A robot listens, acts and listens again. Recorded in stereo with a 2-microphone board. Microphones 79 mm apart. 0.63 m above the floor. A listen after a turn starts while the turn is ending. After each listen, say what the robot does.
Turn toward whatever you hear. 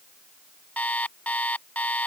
Turn 15° left.
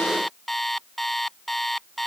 Found it: an alarm clock, straight ahead.